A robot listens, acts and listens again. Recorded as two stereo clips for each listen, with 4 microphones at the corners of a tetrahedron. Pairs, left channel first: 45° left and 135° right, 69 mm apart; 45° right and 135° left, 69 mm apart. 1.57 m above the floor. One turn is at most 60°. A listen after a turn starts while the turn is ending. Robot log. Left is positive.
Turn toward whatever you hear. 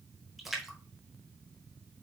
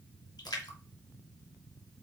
note: The splash: 50° right.
cmd yaw -50
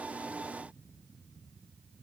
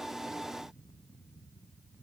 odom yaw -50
end: I heard a splash from this way, but can't make it out now.